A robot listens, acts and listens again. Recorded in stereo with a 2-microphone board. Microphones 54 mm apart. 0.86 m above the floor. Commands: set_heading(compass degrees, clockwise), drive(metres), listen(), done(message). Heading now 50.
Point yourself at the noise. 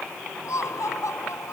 set_heading(320)
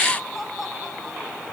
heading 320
done("Facing the laughter.")